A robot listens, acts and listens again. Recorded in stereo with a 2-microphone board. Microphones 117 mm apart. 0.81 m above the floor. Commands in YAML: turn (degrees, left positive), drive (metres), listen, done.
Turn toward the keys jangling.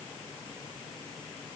listen: true
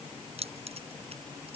turn: -55
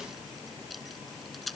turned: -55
done: "Found it: keys jangling, straight ahead."